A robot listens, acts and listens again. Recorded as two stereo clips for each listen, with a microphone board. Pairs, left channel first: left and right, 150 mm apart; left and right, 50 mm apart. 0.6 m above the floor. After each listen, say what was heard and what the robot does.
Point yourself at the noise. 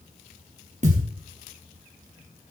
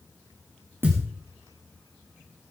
The thud: about 50° right or 130° right. Turn 50° right.
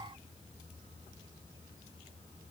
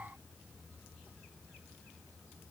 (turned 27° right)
Keep listening.
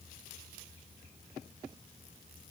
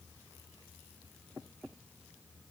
I heard a thud, but can't make it out now. It was about 25° right or 100° right.